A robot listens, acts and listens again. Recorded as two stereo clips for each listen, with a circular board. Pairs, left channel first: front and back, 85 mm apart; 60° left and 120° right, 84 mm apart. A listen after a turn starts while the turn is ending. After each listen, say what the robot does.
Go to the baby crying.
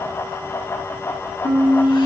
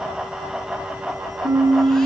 Keep listening.
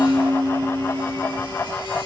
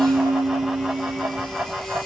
Keep listening.
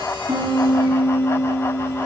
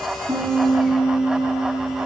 I can't make out a baby crying to turn to.